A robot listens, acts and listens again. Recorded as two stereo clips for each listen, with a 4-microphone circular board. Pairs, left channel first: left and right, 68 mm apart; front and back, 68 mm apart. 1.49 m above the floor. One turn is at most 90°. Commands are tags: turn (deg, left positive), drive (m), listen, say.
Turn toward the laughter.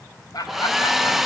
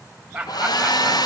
<turn deg="90"/>
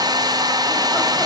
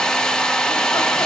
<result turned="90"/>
<turn deg="10"/>
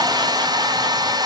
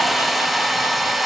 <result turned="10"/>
<listen/>
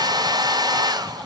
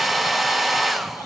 <say>Facing where the laughter came from. I can't hear it now.</say>